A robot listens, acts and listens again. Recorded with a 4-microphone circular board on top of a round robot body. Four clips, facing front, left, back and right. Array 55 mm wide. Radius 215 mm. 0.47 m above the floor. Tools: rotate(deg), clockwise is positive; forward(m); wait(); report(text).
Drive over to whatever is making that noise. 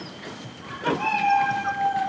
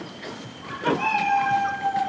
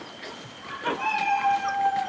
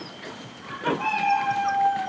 rotate(-85)
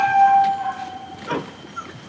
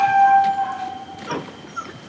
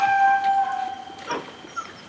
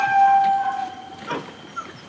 forward(1.0)
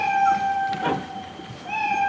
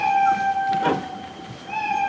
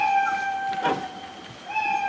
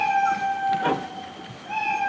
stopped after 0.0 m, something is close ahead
rotate(-10)
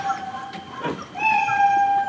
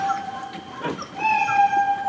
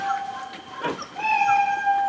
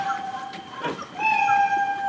report("Blocked. The cat meowing is further on, straight ahead.")